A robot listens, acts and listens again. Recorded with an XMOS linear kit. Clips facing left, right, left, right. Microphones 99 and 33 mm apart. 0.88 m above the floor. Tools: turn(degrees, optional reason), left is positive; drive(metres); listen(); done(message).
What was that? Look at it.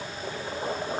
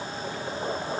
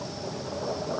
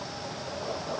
listen()
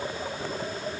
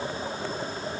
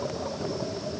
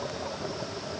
listen()
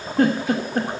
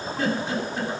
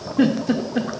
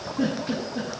turn(degrees=50, reason="The giggle: about 50° left or 130° left.")
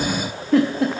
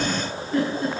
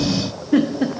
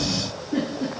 turn(degrees=80, reason="So it is at 80° left.")
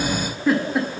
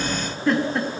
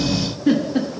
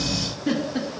done("Found it: a giggle, straight ahead, 1 to 2 m away.")